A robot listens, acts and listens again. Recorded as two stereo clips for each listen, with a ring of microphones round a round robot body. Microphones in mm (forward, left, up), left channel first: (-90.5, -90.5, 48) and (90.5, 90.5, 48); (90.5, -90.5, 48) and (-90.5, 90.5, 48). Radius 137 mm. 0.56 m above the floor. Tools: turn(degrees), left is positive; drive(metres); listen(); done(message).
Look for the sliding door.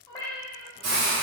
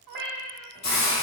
listen()
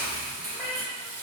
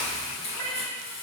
listen()
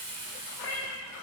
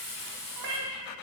done("I can't make out a sliding door to turn to.")